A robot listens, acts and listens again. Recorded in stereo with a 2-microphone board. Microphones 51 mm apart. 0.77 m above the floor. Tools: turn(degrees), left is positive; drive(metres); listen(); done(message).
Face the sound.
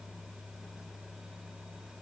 listen()
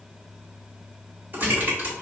turn(degrees=-40)
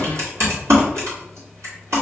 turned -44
turn(degrees=-95)
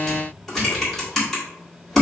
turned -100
done("Found it: typing on a keyboard, straight ahead, 1 to 2 m away.")